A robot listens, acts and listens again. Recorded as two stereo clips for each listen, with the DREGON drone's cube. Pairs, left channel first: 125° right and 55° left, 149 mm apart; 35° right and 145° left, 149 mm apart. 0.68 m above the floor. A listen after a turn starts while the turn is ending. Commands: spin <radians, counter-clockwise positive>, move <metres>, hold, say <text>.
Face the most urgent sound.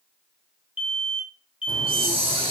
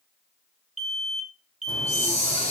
spin -3.05
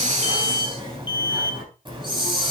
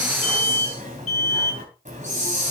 spin -1.13
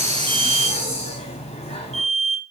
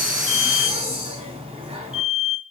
spin 0.26
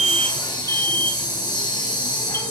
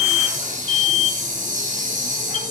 say Found it: an alarm, straight ahead, 1 to 2 m away.